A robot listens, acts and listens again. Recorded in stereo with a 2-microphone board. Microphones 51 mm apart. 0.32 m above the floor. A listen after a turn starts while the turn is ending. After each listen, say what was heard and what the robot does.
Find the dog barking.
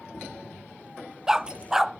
Turn 30° right.
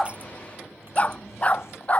So it is at 30° left. Turn 30° left.
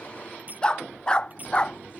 The dog barking is now 20° left. Turn 20° left.
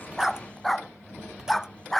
Facing the dog barking.